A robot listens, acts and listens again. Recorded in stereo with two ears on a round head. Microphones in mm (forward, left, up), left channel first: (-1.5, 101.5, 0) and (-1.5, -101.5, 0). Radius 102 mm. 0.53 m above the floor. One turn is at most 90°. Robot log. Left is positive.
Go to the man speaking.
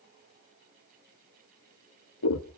cmd idle
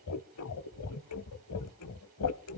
cmd idle
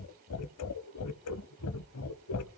end: I can't make out a man speaking to turn to.